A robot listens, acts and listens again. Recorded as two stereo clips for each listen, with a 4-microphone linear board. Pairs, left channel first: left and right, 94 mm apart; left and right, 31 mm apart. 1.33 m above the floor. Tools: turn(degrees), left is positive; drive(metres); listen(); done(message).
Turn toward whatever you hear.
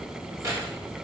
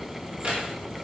turn(degrees=-35)
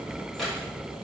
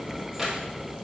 done("Facing the keys jangling, 2 to 4 m away.")